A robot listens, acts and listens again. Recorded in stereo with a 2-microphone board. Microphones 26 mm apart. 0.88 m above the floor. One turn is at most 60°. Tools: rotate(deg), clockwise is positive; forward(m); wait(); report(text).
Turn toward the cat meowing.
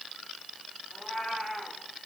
rotate(-30)
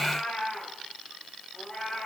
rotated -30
rotate(-60)
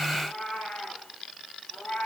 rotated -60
rotate(-60)
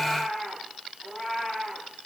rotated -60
report("Found it: a cat meowing, straight ahead, over 4 m away.")